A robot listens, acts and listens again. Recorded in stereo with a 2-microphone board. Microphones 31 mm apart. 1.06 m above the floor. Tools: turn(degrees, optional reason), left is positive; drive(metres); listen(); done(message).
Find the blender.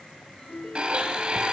turn(degrees=-35, reason="The blender: about 35° right or 145° right.")
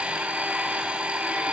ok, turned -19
turn(degrees=-130, reason="So it is at 130° right.")
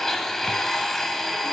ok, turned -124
turn(degrees=10, reason="The blender is now 10° left.")
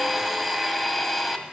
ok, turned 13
done("Found it: a blender, straight ahead, 1 to 2 m away.")